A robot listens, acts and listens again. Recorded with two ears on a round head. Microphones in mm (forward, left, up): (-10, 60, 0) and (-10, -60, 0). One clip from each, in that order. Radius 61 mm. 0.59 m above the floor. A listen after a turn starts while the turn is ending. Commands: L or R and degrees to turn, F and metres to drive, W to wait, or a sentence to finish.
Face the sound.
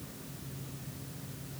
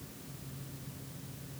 W
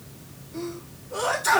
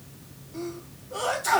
R30
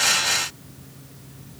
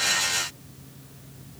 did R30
W
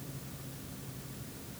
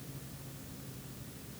I heard a sneeze, but can't make it out now. It was about 25° left or 145° right.